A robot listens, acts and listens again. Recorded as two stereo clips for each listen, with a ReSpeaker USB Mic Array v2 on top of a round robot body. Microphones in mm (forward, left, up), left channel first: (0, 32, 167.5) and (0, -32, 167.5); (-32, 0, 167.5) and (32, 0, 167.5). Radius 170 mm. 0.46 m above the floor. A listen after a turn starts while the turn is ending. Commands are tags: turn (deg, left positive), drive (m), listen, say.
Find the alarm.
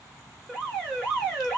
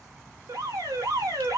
<turn deg="10"/>
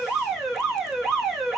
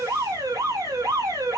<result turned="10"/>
<say>Facing the alarm, 1 to 2 m away.</say>